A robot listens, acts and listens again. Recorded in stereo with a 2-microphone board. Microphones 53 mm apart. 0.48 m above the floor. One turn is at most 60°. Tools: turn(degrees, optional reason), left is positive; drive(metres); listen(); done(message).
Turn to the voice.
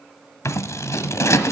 listen()
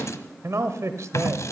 turn(degrees=-60, reason="The man speaking: about 65° right or 115° right.")
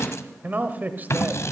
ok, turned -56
turn(degrees=-35, reason="So it is at 35° right.")
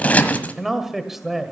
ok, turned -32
done("Found it: a man speaking, straight ahead.")